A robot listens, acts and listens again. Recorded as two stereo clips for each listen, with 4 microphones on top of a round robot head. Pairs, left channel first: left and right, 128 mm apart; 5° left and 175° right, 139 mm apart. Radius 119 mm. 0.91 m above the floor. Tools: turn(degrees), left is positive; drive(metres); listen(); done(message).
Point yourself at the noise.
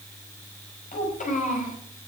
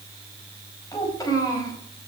turn(degrees=70)
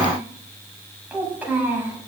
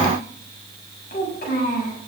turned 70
turn(degrees=-15)
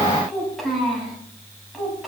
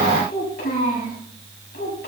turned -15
done("Found it: a child speaking, straight ahead, over 4 m away.")